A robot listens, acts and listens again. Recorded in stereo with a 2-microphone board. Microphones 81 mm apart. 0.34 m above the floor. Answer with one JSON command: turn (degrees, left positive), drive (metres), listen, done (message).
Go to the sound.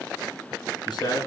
{"turn": 60}
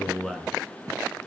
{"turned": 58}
{"drive": 1.0}
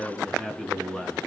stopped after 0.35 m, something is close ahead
{"done": "Blocked. The man speaking is further on, straight ahead."}